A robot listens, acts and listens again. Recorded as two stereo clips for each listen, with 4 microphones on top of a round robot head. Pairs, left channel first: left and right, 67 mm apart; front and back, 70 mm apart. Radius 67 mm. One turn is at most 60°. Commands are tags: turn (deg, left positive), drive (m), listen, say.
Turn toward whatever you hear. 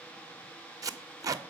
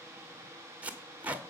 <turn deg="-60"/>
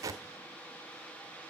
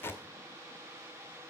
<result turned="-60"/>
<turn deg="-60"/>
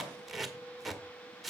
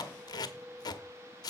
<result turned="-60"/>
<say>Facing the tape being pulled, under 1 m away.</say>